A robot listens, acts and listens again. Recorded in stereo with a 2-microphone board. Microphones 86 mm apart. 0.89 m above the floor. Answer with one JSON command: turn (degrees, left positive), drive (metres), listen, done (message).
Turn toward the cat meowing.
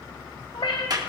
{"turn": 70}
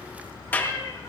{"turn": 35}
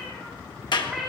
{"done": "Found it: a cat meowing, straight ahead, over 4 m away."}